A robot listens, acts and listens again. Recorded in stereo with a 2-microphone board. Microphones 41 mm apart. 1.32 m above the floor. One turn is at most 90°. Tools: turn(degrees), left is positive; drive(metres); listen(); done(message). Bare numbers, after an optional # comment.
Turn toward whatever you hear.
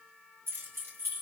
turn(-90)
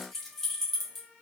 done("Found it: keys jangling, straight ahead.")